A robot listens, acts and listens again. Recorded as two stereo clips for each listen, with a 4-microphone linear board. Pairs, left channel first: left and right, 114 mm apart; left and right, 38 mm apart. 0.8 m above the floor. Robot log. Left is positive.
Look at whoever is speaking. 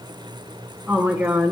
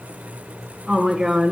cmd yaw -30
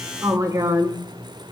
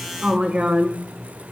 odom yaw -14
note: So it is at 155° right.
cmd yaw -155
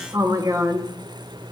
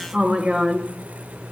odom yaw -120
note: The woman speaking is now 35° right.
cmd yaw -35
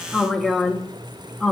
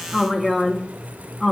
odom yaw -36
end: Facing the woman speaking, under 1 m away.